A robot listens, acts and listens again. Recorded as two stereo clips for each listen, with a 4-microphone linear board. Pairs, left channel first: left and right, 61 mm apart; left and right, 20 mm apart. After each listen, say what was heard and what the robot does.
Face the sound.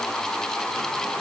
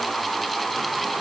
Keep listening.
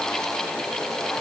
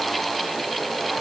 Keep listening.
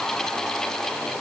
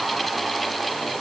I can't make out anything to turn to.